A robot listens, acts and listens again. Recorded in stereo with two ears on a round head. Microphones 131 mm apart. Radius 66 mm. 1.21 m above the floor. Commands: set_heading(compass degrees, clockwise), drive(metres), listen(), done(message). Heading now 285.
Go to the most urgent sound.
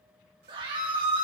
set_heading(315)
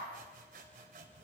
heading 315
listen()
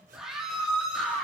drive(1.0)
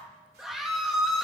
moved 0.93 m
drive(1.0)
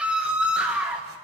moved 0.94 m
set_heading(325)
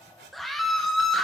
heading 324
drive(1.0)
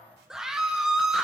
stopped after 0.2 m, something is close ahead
done("Arrived at the scream, straight ahead.")